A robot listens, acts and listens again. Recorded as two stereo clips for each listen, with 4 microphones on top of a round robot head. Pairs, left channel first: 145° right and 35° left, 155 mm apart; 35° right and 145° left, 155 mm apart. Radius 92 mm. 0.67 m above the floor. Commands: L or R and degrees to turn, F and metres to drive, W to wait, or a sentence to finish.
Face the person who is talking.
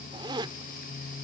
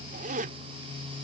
W
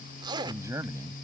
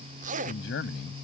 R35
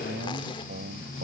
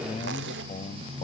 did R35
L15
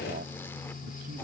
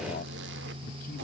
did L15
W
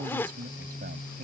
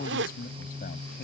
Facing the man speaking.